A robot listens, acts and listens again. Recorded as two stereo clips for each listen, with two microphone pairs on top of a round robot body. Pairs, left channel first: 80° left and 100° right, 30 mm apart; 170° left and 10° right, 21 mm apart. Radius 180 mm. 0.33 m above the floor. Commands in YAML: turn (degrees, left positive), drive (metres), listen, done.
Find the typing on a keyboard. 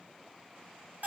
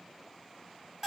listen: true
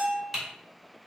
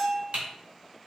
turn: -20
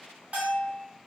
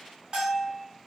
listen: true
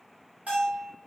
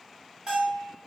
listen: true
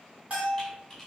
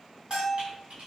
done: "I heard typing on a keyboard from this way, but can't make it out now."